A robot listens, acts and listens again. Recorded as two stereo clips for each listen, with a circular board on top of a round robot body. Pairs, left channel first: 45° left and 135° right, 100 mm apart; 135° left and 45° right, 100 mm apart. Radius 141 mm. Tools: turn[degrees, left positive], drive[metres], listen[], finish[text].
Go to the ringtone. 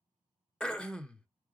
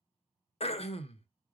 Action: listen[]
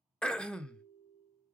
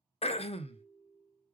Thought: The ringtone: 40° left.
Action: turn[40]
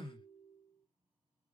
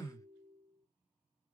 Thought: The ringtone is now 10° right.
Action: turn[-10]
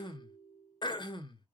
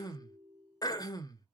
Action: drive[1.0]
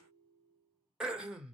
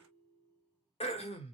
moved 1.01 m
Thought: The ringtone is now 10° right.
Action: turn[-10]
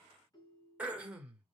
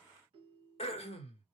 Action: drive[1.0]
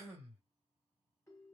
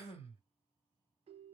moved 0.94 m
Thought: The ringtone is now 20° right.
Action: turn[-20]
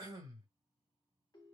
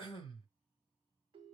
Action: drive[1.0]
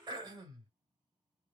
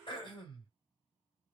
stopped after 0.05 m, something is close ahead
Action: listen[]
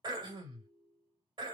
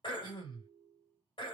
Action: finish[I am next to the ringtone.]